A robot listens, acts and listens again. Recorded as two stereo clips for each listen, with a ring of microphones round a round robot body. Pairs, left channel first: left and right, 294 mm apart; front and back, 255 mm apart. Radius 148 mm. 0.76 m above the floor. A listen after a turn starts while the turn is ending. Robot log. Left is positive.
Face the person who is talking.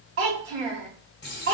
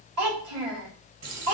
note: The child speaking: 135° right.
cmd yaw -135
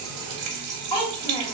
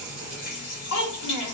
note: The child speaking is now 15° left.
cmd yaw +15
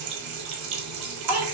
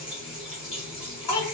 end: Facing the child speaking, 1 to 2 m away.